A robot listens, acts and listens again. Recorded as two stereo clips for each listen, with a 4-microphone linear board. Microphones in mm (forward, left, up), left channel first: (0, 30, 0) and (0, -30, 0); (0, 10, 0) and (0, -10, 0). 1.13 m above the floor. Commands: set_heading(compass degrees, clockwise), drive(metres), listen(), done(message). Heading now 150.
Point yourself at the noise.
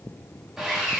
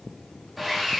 set_heading(180)
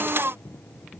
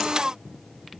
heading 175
listen()
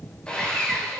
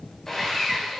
set_heading(160)
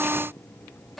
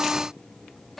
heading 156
done("Found it: sawing, straight ahead, 2 to 4 m away.")